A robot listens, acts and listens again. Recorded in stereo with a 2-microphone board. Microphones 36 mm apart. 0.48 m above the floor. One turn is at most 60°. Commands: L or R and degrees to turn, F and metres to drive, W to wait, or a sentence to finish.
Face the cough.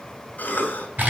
L60
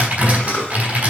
L50
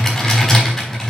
W
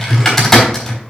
W
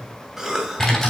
R15
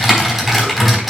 W
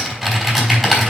W
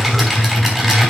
I heard a cough from this way, but can't make it out now.